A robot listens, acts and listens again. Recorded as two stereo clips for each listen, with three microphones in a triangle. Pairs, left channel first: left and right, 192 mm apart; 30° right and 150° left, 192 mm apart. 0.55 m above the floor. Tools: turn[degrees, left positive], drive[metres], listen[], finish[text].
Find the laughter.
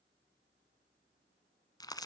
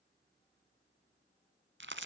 Action: listen[]
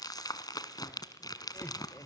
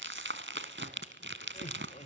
Thought: The laughter: 20° left.
Action: turn[20]
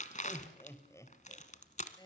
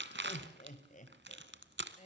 Thought: The laughter is now 25° left.
Action: turn[25]
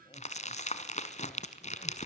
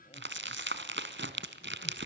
Action: listen[]
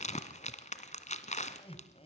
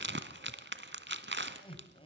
Thought: The laughter is now 30° left.
Action: turn[30]
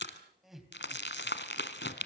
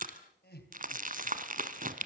Action: finish[Found it: laughter, straight ahead, 2 to 4 m away.]